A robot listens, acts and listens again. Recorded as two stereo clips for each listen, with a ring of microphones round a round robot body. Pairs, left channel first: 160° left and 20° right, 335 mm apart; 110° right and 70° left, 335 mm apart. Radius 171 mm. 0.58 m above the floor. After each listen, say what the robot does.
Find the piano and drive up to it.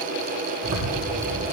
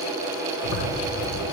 Keep listening.
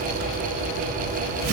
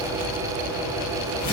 Keep listening.
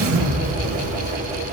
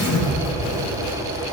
I can't make out a piano to turn to.